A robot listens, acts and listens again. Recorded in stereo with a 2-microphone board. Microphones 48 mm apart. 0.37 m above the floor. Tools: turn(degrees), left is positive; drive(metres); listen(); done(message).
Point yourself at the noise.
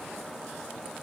listen()
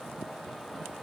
listen()
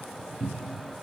turn(degrees=-30)
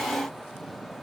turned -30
listen()
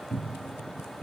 turn(degrees=25)
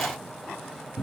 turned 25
turn(degrees=20)
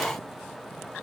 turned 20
listen()
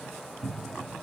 done("Facing the cupboard door, 2 to 4 m away.")